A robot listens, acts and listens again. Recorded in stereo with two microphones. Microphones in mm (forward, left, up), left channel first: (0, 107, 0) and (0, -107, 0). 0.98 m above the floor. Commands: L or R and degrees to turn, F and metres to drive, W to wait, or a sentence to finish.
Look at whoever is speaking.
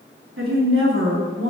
R70
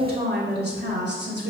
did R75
R55
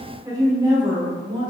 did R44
R20
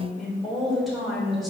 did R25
Facing the woman speaking, 2 to 4 m away.